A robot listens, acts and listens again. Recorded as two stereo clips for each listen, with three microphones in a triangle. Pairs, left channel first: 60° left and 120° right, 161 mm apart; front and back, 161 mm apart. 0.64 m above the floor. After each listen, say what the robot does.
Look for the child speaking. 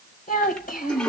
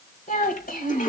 Turn 30° left.
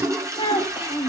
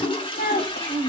Found it: a child speaking, straight ahead, 1 to 2 m away.